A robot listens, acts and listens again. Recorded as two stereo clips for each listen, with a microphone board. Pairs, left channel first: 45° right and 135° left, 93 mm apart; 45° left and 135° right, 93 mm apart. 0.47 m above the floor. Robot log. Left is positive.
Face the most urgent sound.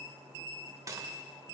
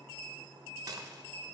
cmd idle
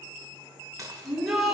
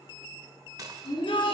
note: The shout: 45° left.
cmd yaw +45
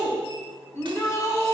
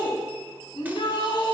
note: The shout is now 15° left.
cmd yaw +15
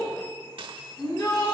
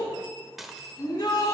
end: Found it: a shout, straight ahead, 2 to 4 m away.